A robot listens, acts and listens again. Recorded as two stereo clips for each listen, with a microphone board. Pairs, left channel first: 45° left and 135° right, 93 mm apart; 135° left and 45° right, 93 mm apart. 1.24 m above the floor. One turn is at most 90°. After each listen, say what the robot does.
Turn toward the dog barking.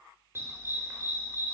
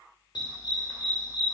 Turn 90° left.
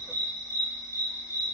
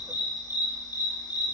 Turn 90° left.
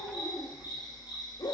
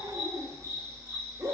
Found it: a dog barking, straight ahead.